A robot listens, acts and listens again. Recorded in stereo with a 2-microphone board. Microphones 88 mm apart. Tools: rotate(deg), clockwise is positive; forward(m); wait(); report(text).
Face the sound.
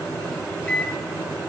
rotate(-30)
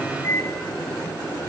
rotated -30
rotate(-135)
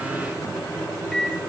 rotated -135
report("Facing the microwave.")